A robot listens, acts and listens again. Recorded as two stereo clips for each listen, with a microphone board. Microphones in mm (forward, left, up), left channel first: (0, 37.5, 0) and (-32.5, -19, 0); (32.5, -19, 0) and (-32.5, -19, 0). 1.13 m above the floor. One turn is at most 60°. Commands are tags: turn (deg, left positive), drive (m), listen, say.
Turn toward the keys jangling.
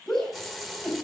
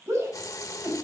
<listen/>
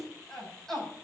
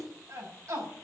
<listen/>
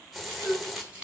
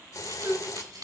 <turn deg="60"/>
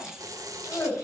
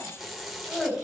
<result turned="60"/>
<turn deg="60"/>
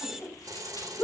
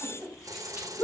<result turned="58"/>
<turn deg="50"/>
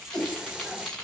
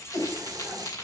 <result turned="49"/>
<turn deg="-15"/>
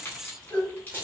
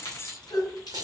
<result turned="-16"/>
<say>Facing the keys jangling, over 4 m away.</say>